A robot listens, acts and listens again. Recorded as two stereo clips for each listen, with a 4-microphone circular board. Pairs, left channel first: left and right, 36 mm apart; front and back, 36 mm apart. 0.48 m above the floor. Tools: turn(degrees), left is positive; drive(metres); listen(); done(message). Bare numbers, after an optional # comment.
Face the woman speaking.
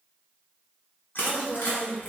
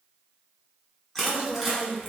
# The woman speaking: 10° left.
turn(10)
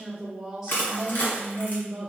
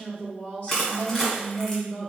# The woman speaking is now 35° right.
turn(-35)
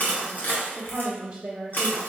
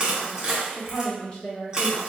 # The woman speaking is now 40° right.
turn(-40)
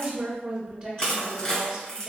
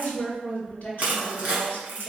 # The woman speaking is now 20° right.
turn(-20)
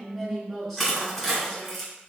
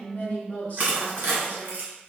done("Facing the woman speaking, 1 to 2 m away.")